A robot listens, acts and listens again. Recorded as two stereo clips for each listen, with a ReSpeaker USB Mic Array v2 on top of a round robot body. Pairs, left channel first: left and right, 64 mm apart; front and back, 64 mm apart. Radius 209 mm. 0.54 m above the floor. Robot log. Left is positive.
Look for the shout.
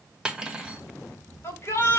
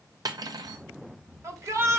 note: The shout: 140° left.
cmd yaw +140
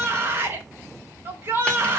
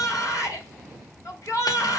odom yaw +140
note: The shout is now 35° right.
cmd yaw -35
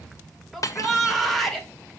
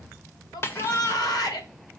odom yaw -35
end: Found it: a shout, straight ahead, 2 to 4 m away.